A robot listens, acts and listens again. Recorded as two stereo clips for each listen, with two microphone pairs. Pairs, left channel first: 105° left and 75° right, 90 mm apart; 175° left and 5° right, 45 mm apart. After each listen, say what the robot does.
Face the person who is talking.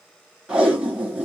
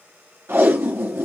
Keep listening.
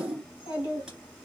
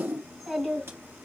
Turn 85° left.
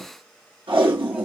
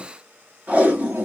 Keep listening.
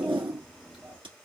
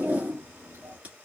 Turn 15° left.
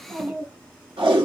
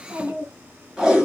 Found it: a child speaking, straight ahead.